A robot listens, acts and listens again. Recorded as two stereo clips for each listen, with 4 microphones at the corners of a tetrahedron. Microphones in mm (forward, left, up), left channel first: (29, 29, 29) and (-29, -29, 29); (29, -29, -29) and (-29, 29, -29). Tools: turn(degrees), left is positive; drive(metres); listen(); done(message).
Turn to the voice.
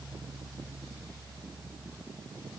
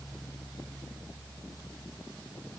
listen()
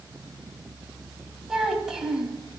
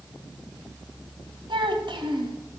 turn(degrees=145)
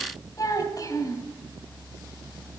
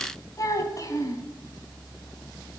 done("Facing the child speaking.")